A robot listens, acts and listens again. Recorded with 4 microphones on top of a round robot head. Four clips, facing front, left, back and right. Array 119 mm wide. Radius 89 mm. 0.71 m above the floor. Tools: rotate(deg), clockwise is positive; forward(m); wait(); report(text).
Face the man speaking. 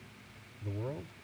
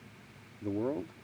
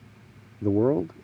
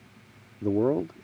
rotate(145)
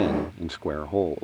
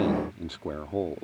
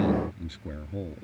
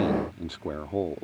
report("Found it: a man speaking, straight ahead.")